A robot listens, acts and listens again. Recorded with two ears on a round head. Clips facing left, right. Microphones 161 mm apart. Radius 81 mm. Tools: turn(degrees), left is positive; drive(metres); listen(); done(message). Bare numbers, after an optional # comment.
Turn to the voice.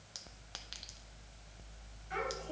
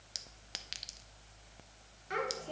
# The child speaking: about 65° right or 115° right.
turn(-65)
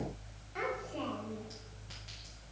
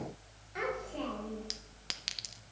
done("Facing the child speaking, 2 to 4 m away.")